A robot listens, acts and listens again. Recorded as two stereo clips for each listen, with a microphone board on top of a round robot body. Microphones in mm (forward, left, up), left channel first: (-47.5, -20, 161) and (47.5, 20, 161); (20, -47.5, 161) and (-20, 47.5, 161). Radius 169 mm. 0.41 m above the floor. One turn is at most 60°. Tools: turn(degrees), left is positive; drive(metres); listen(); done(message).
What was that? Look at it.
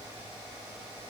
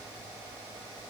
listen()
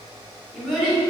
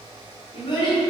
turn(degrees=-60)
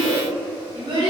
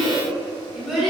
turn(degrees=30)
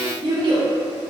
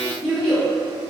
turn(degrees=25)
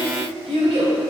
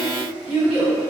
turn(degrees=30)
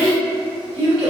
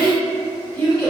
turn(degrees=10)
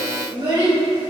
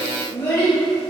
done("Found it: a child speaking, straight ahead.")